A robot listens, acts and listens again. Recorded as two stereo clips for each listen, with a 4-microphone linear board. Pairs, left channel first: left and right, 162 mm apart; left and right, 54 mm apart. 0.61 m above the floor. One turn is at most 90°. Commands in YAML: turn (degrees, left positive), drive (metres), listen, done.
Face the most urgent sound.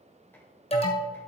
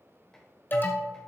turn: 40
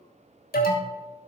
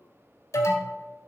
turn: 90
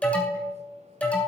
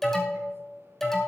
turn: 10
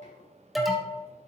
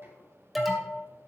done: "Found it: an alarm, straight ahead."